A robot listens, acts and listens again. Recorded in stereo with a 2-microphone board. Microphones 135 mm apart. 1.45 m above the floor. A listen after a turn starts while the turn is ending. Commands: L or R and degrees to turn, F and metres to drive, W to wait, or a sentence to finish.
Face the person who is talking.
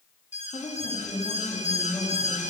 L35
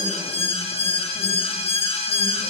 W
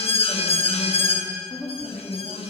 Found it: a woman speaking, straight ahead, 2 to 4 m away.